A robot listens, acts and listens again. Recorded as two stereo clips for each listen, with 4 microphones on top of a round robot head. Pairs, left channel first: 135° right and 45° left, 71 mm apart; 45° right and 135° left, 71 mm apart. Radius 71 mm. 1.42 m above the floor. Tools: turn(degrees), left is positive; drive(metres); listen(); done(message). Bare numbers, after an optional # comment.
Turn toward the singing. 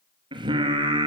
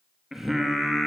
# The singing: 45° left.
turn(45)
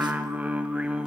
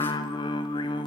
# The singing is now 35° right.
turn(-35)
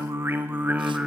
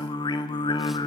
# The singing is now 30° right.
turn(-30)
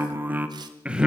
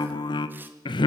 # The singing is now 35° right.
turn(-35)
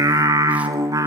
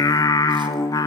done("Facing the singing.")